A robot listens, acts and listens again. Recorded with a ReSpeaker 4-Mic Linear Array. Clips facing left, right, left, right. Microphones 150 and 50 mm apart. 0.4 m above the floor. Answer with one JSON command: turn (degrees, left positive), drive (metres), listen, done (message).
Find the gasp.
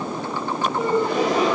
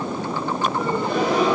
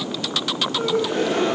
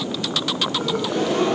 {"turn": 45}
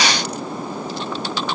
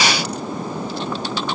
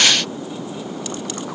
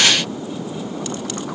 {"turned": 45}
{"listen": true}
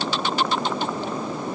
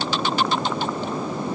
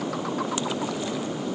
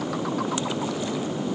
{"done": "I heard a gasp, but can't make it out now. It was about straight ahead or 90° left."}